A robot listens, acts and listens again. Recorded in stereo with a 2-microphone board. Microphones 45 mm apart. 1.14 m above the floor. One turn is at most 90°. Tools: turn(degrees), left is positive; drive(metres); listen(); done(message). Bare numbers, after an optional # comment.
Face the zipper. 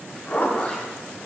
# The zipper: about 45° left or 135° left.
turn(45)
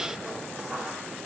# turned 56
# So it is at 10° right.
turn(-10)
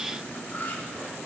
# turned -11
listen()
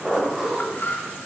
done("Facing the zipper.")